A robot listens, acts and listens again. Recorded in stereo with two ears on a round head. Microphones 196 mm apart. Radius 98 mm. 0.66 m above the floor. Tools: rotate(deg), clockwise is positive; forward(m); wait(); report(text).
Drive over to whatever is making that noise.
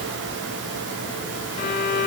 rotate(-35)
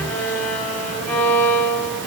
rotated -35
forward(1.0)
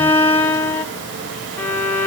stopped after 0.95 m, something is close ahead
rotate(-10)
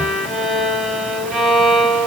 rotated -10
report("Arrived at the violin, straight ahead.")